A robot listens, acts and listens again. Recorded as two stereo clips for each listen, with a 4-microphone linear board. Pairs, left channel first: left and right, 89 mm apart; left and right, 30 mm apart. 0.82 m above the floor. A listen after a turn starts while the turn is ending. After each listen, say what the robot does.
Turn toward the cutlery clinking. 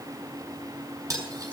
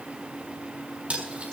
Turn 40° right.
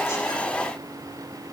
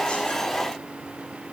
Found it: cutlery clinking, straight ahead, over 4 m away.